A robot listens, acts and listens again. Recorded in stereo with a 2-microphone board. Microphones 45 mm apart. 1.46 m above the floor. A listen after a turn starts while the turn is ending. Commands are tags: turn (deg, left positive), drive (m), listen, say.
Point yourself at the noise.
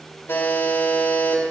<turn deg="75"/>
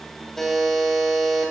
<say>Found it: a buzzer, straight ahead, 2 to 4 m away.</say>